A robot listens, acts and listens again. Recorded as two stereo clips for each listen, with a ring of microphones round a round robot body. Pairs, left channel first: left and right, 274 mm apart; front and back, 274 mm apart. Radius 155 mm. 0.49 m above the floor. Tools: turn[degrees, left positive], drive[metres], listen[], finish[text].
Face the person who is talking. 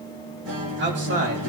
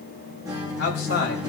Thought: The man speaking: 40° right.
Action: turn[-40]
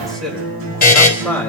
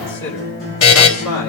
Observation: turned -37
Thought: The man speaking is now 10° left.
Action: turn[10]
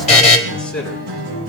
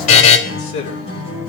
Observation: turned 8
Action: finish[Found it: a man speaking, straight ahead, over 4 m away.]